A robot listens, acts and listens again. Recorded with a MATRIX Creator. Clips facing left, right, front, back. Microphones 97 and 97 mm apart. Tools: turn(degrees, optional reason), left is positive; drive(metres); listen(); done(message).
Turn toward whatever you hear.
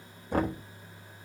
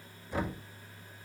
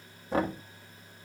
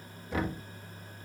turn(degrees=55, reason="The knocking: 55° left.")
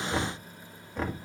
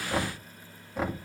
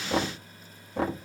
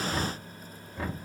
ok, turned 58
done("Found it: knocking, straight ahead.")